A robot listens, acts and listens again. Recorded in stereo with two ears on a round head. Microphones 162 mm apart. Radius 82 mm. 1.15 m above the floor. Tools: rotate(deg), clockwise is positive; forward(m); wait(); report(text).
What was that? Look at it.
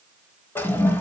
rotate(-30)
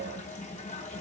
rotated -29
rotate(-135)
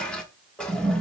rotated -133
report("Facing the toilet flushing.")